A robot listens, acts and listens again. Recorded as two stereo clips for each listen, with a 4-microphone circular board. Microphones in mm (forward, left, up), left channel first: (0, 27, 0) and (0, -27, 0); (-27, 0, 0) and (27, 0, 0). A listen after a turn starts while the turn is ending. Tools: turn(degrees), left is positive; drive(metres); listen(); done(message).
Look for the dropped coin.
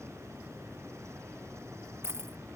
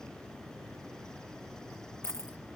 turn(degrees=-135)
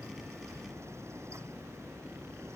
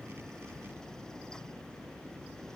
done("Facing where the dropped coin came from. I can't hear it now.")